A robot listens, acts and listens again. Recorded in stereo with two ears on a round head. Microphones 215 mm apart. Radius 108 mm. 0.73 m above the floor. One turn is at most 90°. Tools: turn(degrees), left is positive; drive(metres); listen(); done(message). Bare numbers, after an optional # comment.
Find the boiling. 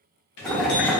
turn(30)
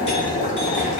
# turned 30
# So it is at 150° left.
turn(90)
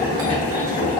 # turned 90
# The boiling is now 20° left.
turn(20)
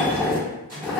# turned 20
done("Found it: boiling, straight ahead.")